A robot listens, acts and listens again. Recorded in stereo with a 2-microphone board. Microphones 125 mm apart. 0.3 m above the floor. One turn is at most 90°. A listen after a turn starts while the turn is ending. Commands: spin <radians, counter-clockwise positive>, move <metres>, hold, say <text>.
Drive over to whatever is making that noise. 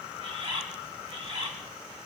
spin -0.87
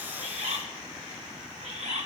spin -1.40
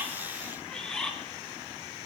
move 1.0
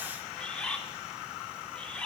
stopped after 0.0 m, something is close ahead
spin 0.17
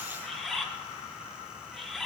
say Something is in my way. I am facing the bird but have not reached it.